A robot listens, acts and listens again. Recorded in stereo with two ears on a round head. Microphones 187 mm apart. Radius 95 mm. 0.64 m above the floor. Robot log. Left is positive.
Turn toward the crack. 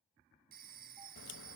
note: The crack: about 65° left or 115° left.
cmd yaw +65
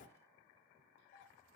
note: So it is at 45° left.
cmd yaw +45
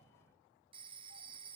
end: Facing where the crack came from. I can't hear it now.